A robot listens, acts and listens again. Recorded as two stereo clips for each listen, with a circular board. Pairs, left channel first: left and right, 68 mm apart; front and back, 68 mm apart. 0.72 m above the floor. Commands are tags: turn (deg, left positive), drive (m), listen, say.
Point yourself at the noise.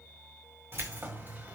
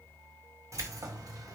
<turn deg="-150"/>
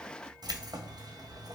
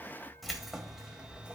<turn deg="-105"/>
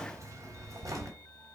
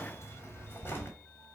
<turn deg="-60"/>
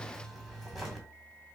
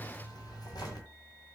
<say>Found it: keys jangling, straight ahead.</say>